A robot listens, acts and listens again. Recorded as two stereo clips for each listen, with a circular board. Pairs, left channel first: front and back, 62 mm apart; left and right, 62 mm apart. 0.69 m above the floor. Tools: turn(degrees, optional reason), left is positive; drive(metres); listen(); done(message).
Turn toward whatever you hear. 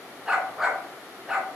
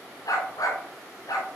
turn(degrees=95, reason="The dog barking: 95° left.")
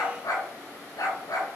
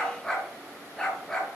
turn(degrees=10, reason="The dog barking is now 10° left.")
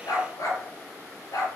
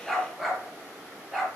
done("Facing the dog barking, over 4 m away.")